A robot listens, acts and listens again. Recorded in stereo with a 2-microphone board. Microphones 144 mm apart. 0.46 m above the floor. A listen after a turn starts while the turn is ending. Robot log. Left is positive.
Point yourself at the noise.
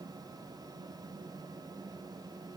cmd idle
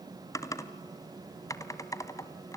note: The typing on a keyboard: about 25° left or 155° left.
cmd yaw +25
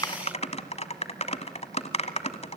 note: So it is at 135° left.
cmd yaw +135
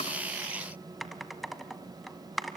end: Facing the typing on a keyboard, 1 to 2 m away.